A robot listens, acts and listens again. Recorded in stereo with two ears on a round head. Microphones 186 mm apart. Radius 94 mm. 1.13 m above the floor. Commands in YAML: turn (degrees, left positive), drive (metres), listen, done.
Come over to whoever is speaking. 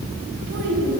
turn: -90
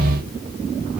listen: true
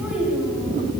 drive: 1.0
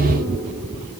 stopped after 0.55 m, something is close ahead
listen: true
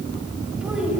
listen: true
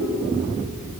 done: "Something is in my way. I am facing the child speaking but have not reached it."